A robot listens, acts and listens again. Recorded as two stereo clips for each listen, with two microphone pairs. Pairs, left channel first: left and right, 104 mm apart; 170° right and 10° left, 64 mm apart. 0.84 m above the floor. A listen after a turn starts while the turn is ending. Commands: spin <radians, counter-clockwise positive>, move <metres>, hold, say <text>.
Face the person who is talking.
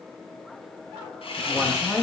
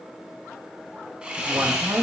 say Facing the woman speaking.